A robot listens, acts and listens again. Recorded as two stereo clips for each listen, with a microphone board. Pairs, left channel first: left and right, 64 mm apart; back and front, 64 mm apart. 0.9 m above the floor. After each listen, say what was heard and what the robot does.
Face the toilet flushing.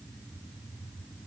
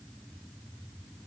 Keep listening.
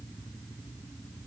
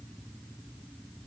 Keep listening.
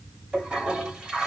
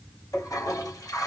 The toilet flushing: 160° right. Turn 160° right.
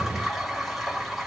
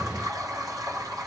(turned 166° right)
Found it: a toilet flushing, straight ahead, 2 to 4 m away.